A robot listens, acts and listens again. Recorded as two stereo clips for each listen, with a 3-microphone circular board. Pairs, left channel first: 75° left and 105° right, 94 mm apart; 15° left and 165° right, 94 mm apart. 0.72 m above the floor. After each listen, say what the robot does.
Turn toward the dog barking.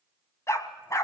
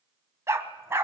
Turn 130° left.
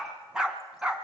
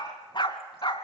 Turn 25° right.
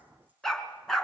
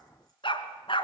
Turn 10° right.
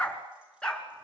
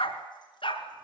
Found it: a dog barking, straight ahead.